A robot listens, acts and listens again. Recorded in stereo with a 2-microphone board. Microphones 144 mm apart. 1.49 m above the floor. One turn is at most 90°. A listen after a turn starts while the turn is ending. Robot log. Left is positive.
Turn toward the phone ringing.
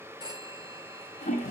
note: The phone ringing: about 25° right or 155° right.
cmd yaw -25
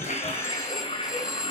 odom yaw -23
end: Facing the phone ringing.